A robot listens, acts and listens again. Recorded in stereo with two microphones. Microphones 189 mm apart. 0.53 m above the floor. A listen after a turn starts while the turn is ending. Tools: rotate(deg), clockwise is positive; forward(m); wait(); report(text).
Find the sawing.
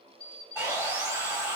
rotate(30)
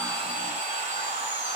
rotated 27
rotate(140)
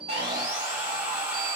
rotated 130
rotate(10)
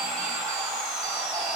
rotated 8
report("Facing the sawing.")